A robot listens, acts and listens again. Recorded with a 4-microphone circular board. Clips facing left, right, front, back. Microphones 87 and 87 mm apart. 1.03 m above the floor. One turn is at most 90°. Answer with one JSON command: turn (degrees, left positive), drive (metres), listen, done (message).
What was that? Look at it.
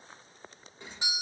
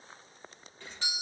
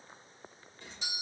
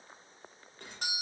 {"turn": 90}
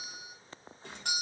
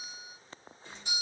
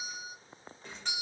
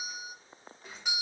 {"turn": 90}
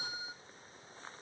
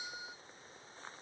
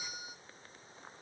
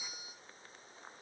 {"turn": 20}
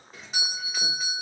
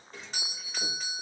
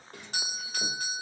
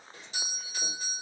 {"done": "Found it: a doorbell, straight ahead, 1 to 2 m away."}